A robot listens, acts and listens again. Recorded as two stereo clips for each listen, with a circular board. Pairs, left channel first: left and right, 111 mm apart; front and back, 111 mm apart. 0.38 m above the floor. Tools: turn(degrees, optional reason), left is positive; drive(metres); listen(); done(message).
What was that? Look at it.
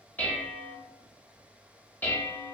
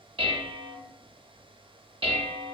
turn(degrees=160, reason="The dishes clattering: 160° left.")
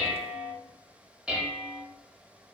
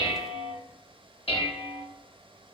turn(degrees=-10, reason="The dishes clattering is now 10° right.")
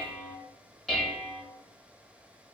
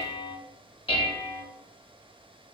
done("Facing the dishes clattering, under 1 m away.")